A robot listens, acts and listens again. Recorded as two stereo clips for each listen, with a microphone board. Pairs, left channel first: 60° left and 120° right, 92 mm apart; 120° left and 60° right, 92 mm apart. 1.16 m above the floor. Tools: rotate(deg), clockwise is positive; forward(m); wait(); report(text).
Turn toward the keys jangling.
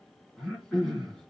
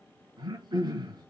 wait()
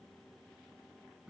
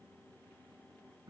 wait()
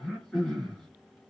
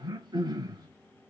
report("I can't make out keys jangling to turn to.")